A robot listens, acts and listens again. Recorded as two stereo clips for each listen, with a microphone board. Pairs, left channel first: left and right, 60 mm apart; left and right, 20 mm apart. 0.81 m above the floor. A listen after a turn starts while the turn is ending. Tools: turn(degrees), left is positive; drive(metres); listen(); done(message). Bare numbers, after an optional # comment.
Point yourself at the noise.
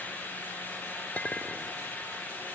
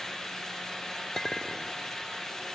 # The clink: about 25° left or 155° left.
turn(25)
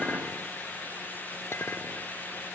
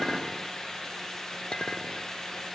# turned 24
# So it is at 130° left.
turn(130)
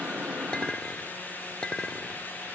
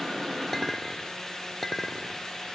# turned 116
# The clink is now 15° left.
turn(15)
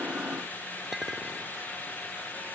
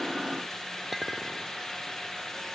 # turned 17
done("Facing the clink.")